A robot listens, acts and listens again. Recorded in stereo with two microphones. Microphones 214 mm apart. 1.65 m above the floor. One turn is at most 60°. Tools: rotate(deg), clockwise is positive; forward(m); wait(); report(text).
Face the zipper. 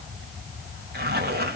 rotate(50)
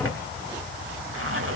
rotate(60)
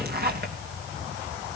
rotate(45)
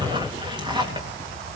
rotate(20)
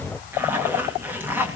rotate(10)
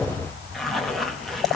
report("Found it: a zipper, straight ahead.")